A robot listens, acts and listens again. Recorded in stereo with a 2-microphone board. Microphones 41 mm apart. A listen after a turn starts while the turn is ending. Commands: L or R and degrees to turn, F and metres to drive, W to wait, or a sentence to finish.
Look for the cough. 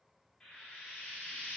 W
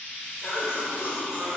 L65
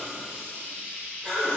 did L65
L15
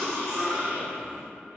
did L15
Found it: a cough, straight ahead.